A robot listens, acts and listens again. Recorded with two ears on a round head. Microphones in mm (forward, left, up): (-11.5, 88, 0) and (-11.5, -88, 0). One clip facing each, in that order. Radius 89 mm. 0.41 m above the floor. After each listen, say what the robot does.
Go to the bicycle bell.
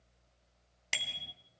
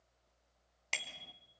Turn 30° left.
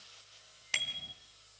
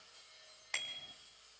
Turn 140° left.
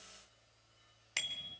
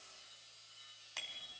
Turn 30° left.
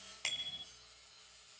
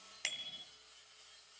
Turn 20° right.
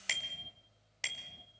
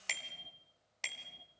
Drive 1.0 m forward.
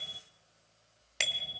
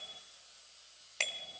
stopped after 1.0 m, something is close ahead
Turn 10° left.
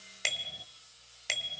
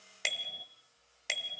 I am next to the bicycle bell.